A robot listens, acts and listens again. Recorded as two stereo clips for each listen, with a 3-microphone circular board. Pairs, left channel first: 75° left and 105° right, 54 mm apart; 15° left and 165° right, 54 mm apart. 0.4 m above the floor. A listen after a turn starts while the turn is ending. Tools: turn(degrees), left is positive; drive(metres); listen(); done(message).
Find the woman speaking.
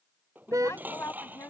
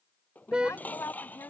turn(degrees=40)
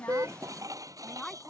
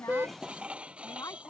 turn(degrees=-10)
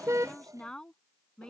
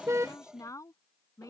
done("Found it: a woman speaking, straight ahead.")